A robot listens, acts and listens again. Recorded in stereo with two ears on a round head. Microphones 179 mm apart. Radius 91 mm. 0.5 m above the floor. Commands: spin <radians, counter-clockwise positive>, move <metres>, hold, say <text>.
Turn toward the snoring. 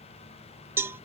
hold
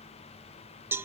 hold
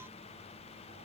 say I can't make out snoring to turn to.